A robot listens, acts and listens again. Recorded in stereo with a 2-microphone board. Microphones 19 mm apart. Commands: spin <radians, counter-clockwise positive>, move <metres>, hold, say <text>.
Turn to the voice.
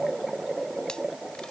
hold
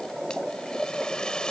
hold
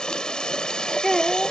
spin 0.26
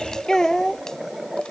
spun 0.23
spin 0.52
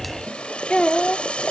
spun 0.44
spin 2.09
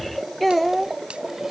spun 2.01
spin 0.17
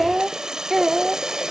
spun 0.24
say Found it: a child speaking, straight ahead.